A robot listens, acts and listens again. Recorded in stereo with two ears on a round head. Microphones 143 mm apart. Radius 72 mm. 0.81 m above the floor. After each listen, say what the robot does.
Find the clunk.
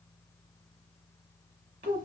Keep listening.
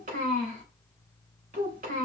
Keep listening.
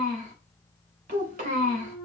Turn 20° right.
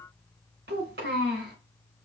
Keep listening.
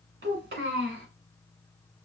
I heard a clunk, but can't make it out now. It was about straight ahead or 140° right.